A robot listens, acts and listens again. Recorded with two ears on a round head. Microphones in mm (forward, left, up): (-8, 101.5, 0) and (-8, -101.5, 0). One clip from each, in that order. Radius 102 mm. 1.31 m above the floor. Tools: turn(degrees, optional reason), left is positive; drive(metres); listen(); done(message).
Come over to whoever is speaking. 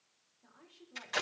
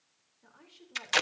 turn(degrees=-50, reason="The woman speaking: about 50° right or 130° right.")
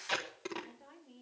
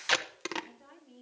drive(metres=1.0)
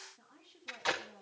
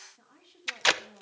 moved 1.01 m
drive(metres=1.0)
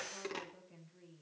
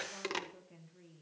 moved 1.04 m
drive(metres=1.0)
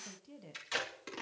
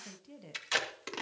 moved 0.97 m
drive(metres=1.0)
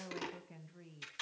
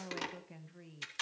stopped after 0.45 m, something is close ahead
done("Arrived at the woman speaking, straight ahead.")